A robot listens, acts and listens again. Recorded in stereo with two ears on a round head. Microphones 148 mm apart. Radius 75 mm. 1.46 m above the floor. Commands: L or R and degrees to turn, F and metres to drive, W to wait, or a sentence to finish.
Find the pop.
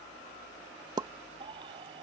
R25
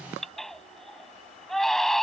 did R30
W
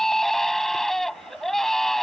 I heard a pop, but can't make it out now. It was about 5° left or 125° right.